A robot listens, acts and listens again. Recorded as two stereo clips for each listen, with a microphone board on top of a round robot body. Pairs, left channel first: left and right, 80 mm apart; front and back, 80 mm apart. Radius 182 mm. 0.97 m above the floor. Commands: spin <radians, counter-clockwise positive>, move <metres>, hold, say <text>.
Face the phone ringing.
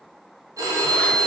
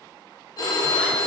spin -0.79
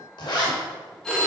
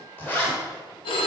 say Found it: a phone ringing, straight ahead.